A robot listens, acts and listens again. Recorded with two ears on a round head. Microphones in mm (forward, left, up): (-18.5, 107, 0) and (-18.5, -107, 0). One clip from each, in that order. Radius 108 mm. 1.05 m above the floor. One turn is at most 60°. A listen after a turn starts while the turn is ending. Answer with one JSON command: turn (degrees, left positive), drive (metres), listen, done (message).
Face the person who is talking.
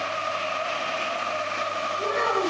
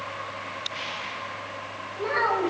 {"turn": -60}
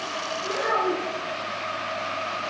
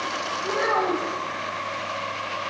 {"turn": -60}
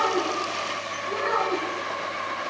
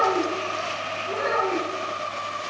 {"done": "Found it: a child speaking, straight ahead."}